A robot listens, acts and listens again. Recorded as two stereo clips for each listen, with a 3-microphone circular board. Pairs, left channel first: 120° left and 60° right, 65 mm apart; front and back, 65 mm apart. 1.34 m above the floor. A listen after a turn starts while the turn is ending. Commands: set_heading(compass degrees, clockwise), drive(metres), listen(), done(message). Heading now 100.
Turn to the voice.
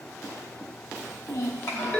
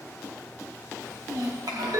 set_heading(295)
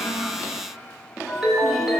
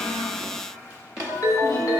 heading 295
listen()
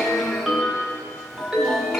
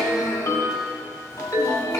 listen()
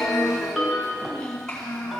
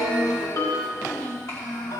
set_heading(255)
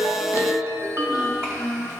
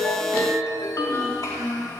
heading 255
done("Found it: a child speaking, straight ahead, 2 to 4 m away.")